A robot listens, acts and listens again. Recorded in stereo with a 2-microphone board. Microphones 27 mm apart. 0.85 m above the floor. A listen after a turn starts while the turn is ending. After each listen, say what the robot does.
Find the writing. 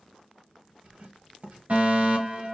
Turn 55° right.
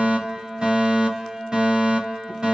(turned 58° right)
Keep listening.
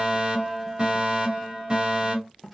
Found it: writing, straight ahead, 1 to 2 m away.